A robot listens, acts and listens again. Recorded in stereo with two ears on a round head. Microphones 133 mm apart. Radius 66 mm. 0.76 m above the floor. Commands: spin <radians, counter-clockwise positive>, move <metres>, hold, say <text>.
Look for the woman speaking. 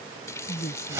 spin 1.31
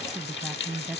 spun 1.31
say Found it: a woman speaking, straight ahead.